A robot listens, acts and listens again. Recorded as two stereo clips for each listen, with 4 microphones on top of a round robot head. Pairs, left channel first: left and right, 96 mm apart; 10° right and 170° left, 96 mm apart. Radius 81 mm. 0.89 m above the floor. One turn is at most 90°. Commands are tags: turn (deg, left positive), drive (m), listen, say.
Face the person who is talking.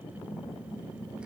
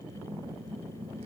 <listen/>
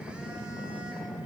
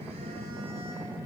<listen/>
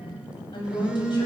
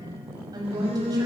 <turn deg="90"/>
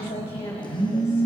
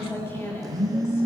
<turn deg="55"/>
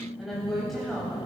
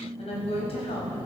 <say>Found it: a woman speaking, straight ahead, over 4 m away.</say>